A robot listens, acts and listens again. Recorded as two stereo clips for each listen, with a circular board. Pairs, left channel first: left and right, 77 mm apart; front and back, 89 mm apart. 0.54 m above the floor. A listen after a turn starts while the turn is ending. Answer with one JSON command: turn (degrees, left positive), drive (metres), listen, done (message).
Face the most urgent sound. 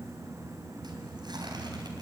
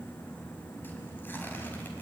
{"listen": true}
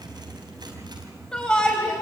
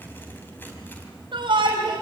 {"turn": 170}
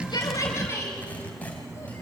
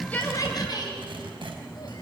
{"turn": 35}
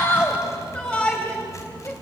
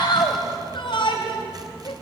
{"turn": 15}
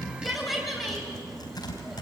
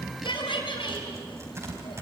{"done": "Found it: a shout, straight ahead."}